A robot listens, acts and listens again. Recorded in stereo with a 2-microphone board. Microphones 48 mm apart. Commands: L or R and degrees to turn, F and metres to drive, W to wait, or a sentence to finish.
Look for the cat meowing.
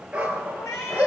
L60
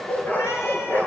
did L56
W
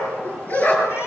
W
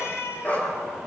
L55
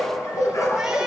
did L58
W
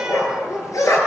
W
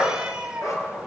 R15
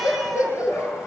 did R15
W
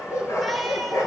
W
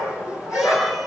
Facing where the cat meowing came from. I can't hear it now.